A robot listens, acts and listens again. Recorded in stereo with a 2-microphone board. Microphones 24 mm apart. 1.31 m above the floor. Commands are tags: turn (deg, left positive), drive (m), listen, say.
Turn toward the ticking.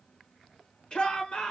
<listen/>
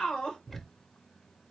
<turn deg="30"/>
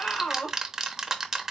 <turn deg="-20"/>
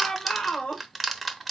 <say>Facing the ticking.</say>